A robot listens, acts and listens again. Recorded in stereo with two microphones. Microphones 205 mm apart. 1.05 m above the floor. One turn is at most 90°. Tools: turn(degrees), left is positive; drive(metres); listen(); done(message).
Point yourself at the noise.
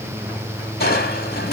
turn(degrees=50)
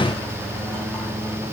listen()
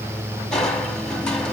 done("Found it: crushing, straight ahead, 1 to 2 m away.")